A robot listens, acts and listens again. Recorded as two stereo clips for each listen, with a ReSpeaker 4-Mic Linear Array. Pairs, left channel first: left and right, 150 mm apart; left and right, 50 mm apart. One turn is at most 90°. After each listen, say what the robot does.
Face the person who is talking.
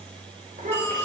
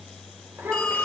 Turn 65° right.
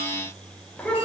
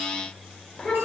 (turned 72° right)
Turn 10° left.
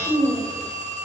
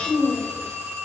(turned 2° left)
Found it: a child speaking, straight ahead.